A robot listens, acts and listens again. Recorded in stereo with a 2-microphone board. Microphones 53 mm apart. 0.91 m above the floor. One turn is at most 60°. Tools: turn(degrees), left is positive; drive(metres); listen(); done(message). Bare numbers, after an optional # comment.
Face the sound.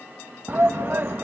# The shout: about 40° right or 140° right.
turn(-40)
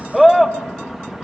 done("Found it: a shout, straight ahead, 1 to 2 m away.")